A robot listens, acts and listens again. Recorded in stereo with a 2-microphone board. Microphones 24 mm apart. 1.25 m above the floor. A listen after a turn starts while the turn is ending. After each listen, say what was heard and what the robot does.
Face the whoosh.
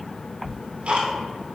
Keep listening.
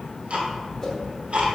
The whoosh: about 30° left or 150° left. Turn 30° left.
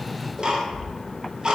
Keep listening.
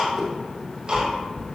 Found it: a whoosh, straight ahead, under 1 m away.